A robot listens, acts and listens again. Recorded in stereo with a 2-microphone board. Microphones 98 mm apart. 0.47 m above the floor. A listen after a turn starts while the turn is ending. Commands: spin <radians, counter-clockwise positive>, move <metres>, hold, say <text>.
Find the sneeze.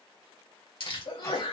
spin 1.05
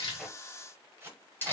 hold
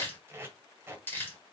say I heard a sneeze, but can't make it out now. It was about straight ahead or 60° left.